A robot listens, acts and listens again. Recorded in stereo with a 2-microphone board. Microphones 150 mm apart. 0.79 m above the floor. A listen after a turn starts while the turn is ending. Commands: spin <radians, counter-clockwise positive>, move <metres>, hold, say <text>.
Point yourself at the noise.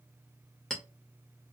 spin 0.52
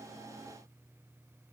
hold
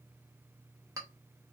spin -0.44
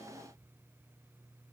hold
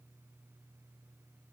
hold
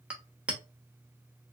spin -0.17
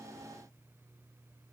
hold
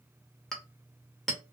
say Found it: a clink, straight ahead, under 1 m away.